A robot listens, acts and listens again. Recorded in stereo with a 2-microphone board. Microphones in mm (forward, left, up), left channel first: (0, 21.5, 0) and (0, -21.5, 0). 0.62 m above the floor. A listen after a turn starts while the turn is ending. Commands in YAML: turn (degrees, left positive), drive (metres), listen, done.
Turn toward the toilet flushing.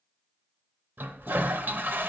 turn: -55
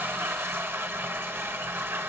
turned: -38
turn: -85
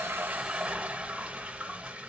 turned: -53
turn: -35
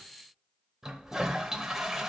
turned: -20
turn: -15
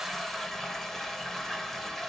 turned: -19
done: "Found it: a toilet flushing, straight ahead, under 1 m away."